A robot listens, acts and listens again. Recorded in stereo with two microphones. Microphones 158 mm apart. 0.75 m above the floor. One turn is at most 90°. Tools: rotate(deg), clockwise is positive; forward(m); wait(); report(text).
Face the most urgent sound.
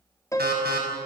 rotate(90)
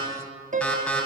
report("Facing the alarm.")